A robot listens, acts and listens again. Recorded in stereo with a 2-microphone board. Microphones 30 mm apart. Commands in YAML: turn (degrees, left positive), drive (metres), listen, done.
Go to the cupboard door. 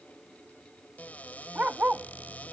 turn: 65
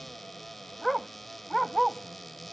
drive: 1.0
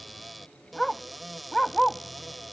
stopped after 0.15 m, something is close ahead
done: "Blocked. The cupboard door is further on, straight ahead."